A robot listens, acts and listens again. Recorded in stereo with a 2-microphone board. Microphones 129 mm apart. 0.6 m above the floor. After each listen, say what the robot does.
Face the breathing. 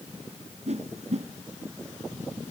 Keep listening.
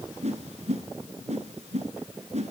Keep listening.
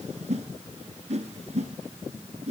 I can't make out breathing to turn to.